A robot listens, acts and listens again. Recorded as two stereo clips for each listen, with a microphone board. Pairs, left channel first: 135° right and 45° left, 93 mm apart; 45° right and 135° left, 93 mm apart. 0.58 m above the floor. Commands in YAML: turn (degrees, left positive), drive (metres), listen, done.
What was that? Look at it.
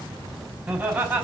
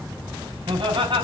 turn: 115
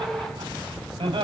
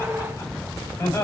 turn: 15
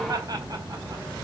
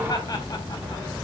listen: true
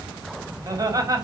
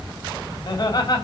done: "Facing the laughter, over 4 m away."